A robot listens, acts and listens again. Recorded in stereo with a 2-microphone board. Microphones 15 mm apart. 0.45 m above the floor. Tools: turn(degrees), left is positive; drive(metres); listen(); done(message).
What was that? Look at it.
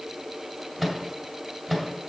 turn(degrees=-30)
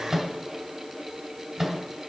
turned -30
turn(degrees=-150)
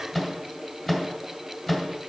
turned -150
turn(degrees=20)
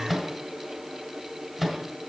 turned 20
done("Facing the microwave.")